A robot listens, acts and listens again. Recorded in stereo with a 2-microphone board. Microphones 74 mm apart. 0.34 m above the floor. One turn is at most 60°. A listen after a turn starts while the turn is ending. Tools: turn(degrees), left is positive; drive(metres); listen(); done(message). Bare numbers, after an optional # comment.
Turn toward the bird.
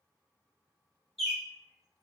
turn(30)
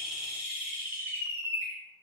# So it is at 25° right.
turn(-25)
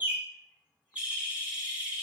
# The bird is now 15° right.
turn(-15)
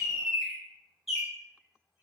done("Found it: a bird, straight ahead.")